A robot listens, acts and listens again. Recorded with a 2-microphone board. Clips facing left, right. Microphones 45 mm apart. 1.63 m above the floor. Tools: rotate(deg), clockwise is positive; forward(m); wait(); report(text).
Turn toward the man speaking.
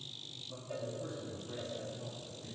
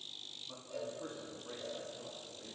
rotate(45)
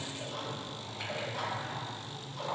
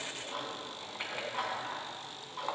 wait()
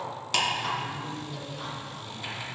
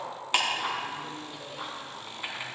wait()
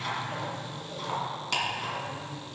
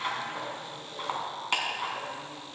report("I heard a man speaking, but can't make it out now. It was about straight ahead or 90° right.")